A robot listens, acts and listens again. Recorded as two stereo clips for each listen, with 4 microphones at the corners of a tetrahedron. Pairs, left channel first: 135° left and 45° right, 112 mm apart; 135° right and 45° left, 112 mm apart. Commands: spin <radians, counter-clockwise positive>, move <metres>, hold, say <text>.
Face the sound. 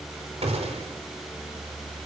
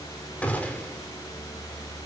spin -1.05
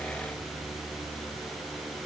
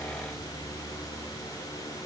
say Facing where the gunshot came from. I can't hear it now.